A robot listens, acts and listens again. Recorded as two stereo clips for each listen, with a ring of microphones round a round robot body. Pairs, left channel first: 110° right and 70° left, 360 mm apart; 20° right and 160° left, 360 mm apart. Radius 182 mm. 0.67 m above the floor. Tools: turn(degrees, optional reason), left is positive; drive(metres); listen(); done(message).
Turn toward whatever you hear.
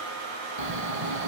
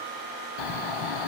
done("Facing the snoring, under 1 m away.")